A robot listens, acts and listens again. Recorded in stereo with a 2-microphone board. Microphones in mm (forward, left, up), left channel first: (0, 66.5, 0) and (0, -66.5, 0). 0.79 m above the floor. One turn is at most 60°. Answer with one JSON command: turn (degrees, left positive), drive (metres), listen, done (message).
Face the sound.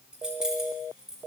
{"turn": -30}
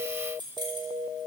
{"turn": -60}
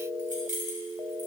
{"turn": -60}
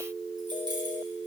{"turn": -20}
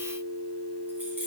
{"listen": true}
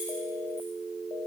{"done": "I heard keys jangling from this way, but can't make it out now."}